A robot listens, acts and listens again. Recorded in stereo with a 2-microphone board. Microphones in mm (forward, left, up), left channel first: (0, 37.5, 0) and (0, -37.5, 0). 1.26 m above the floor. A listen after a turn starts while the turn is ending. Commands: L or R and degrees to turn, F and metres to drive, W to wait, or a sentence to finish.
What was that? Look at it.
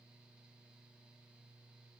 W
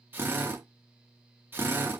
R30
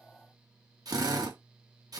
R120
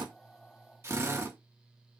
R40
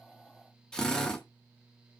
L10
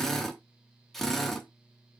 Facing the drill.